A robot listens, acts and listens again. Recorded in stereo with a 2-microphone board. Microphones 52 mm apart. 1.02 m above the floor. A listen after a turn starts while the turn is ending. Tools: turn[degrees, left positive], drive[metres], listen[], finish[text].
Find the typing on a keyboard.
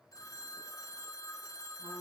Action: listen[]
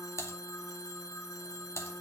Thought: The typing on a keyboard: about 55° left or 125° left.
Action: turn[55]
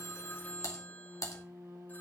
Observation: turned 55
Thought: So it is at 70° left.
Action: turn[70]
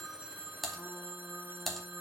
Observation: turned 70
Action: finish[Found it: typing on a keyboard, straight ahead, 2 to 4 m away.]